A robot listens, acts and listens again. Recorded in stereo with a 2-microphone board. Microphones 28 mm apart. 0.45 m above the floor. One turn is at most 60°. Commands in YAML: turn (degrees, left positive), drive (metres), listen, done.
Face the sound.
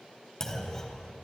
turn: 20
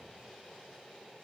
listen: true
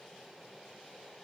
done: "I heard a clunk, but can't make it out now. It was about straight ahead or 140° left."